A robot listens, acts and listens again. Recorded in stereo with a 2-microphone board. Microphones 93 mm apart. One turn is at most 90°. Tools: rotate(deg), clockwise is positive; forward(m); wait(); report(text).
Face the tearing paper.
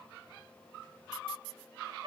wait()
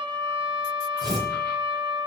rotate(50)
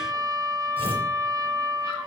rotate(80)
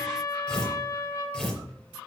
rotate(-15)
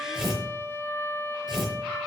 report("Found it: tearing paper, straight ahead, over 4 m away.")